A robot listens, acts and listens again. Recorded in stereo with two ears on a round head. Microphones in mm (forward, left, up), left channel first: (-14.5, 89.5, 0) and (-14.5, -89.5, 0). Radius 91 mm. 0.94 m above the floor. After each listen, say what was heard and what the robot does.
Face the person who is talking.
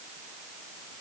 Keep listening.
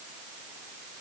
Keep listening.
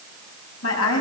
Turn 90° left.
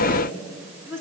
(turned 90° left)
So it is at 10° right. Turn 10° right.
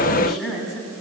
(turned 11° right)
Facing the woman speaking.